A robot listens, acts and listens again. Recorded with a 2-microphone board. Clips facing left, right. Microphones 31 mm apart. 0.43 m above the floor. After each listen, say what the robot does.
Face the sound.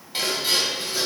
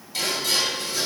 Turn 30° left.
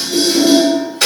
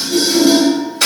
Facing the dishes clattering, 1 to 2 m away.